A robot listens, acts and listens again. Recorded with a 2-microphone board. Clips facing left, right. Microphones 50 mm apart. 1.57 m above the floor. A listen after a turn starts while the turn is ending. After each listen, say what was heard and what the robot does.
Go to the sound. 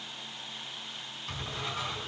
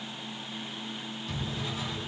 The drawer: about 55° left or 125° left. Turn 55° left.
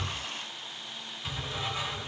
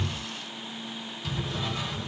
So it is at 20° left. Turn 20° left.
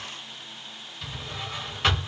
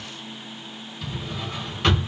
Drive 1.0 m forward.
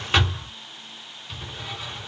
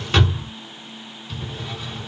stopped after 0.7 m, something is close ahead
The drawer is now 15° left. Turn 15° left.
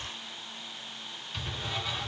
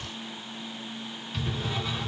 Arrived at the drawer, straight ahead.